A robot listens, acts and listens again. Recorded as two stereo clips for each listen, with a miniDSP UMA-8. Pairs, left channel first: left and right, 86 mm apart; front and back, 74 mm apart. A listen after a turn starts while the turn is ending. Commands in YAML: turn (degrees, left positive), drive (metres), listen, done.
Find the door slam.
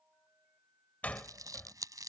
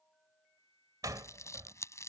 turn: 160
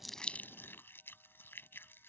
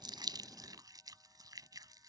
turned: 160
done: "I heard a door slam from this way, but can't make it out now."